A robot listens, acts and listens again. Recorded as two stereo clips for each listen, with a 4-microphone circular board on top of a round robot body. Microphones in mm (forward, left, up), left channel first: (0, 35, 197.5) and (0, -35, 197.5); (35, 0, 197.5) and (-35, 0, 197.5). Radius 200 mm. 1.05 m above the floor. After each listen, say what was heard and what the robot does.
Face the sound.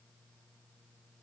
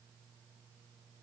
Keep listening.
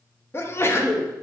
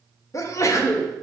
The sneeze: 40° left. Turn 40° left.
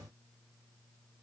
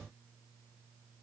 Facing where the sneeze came from. I can't hear it now.